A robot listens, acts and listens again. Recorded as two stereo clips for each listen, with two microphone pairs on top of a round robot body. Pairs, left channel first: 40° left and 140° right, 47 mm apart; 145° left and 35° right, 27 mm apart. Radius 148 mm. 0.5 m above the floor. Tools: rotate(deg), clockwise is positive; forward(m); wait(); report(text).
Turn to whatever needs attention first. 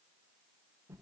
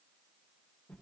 wait()
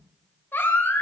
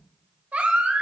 rotate(10)
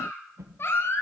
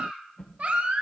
report("Facing the baby crying.")